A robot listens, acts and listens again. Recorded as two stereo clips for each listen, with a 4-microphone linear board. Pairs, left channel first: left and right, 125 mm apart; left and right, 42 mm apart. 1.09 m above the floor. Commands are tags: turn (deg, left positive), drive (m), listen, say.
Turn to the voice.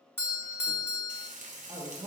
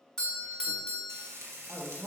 <turn deg="-35"/>
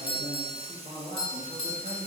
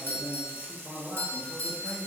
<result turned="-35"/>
<turn deg="-110"/>
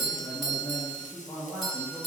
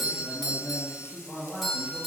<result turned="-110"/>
<turn deg="15"/>
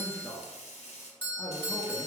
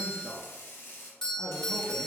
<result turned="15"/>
<say>Found it: a man speaking, straight ahead.</say>